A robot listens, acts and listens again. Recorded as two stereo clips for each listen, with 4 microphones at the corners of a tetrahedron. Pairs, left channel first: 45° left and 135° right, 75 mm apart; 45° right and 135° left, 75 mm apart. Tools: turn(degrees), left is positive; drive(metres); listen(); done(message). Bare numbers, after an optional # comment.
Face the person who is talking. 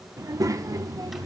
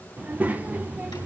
# The child speaking: 160° right.
turn(-160)
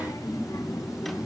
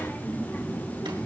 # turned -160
# The child speaking is now 20° left.
turn(20)
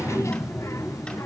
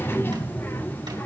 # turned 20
done("Facing the child speaking.")